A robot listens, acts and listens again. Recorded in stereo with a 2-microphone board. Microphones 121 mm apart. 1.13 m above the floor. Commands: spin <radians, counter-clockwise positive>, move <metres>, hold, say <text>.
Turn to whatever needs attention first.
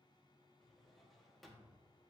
hold
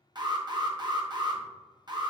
spin -0.61
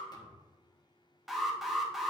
say Found it: an alarm, straight ahead, 1 to 2 m away.